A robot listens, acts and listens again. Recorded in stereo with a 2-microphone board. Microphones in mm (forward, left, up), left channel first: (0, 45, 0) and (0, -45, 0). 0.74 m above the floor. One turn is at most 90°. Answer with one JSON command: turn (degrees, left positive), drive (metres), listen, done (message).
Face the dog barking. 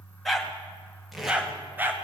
{"turn": -25}
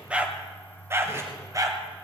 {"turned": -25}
{"turn": -40}
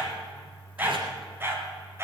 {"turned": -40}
{"turn": -30}
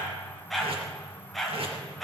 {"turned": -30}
{"done": "Found it: a dog barking, straight ahead."}